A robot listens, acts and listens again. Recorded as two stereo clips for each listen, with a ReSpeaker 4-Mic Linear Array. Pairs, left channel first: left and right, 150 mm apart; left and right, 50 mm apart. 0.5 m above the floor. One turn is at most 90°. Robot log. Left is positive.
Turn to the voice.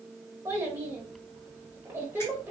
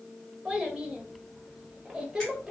note: The child speaking: about 15° right or 165° right.
cmd yaw -15
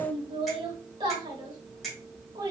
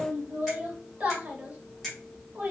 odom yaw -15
note: So it is at 150° right.
cmd yaw -90
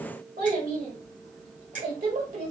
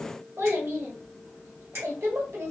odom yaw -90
note: The child speaking is now 80° right.
cmd yaw -80
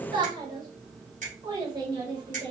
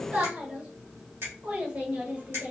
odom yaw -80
note: The child speaking is now 30° right.
cmd yaw -30
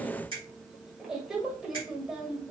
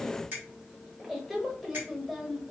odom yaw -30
end: Found it: a child speaking, straight ahead.